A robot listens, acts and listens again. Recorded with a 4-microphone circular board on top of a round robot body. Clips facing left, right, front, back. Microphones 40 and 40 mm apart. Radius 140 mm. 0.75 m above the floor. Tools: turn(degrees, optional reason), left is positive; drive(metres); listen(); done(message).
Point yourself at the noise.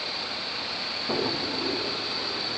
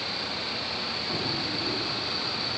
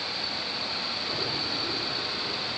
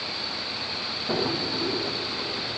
turn(degrees=130, reason="The drawer: 130° left.")
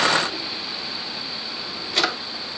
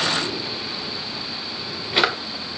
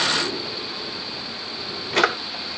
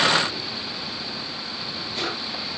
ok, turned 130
turn(degrees=-20, reason="The drawer is now 20° right.")
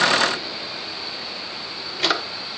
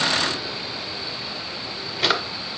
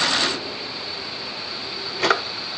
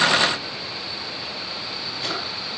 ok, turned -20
done("Facing the drawer.")